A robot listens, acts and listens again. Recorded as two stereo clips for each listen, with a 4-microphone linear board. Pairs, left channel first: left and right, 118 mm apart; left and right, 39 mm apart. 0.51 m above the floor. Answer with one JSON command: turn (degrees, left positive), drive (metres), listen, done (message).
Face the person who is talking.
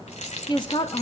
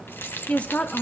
{"turn": 40}
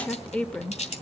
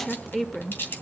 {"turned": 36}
{"turn": 10}
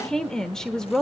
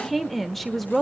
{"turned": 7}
{"done": "Facing the woman speaking."}